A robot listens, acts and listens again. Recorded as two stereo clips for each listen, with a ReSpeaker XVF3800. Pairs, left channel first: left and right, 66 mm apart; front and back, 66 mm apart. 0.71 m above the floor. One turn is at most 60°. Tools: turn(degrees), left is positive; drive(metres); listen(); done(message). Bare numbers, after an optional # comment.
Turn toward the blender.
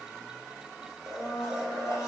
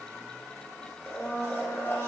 # The blender: 50° left.
turn(50)
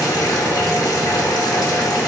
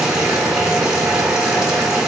listen()
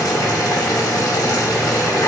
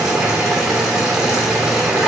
listen()
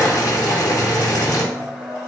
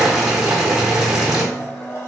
# The blender is now 40° left.
turn(40)
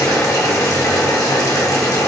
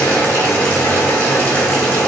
listen()
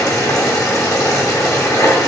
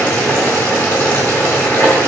listen()
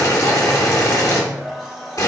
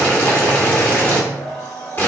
done("Facing the blender.")